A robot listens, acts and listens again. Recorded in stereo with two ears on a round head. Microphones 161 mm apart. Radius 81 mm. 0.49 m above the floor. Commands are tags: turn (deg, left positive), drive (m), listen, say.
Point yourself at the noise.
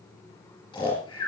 <turn deg="20"/>
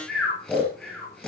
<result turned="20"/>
<say>Found it: snoring, straight ahead.</say>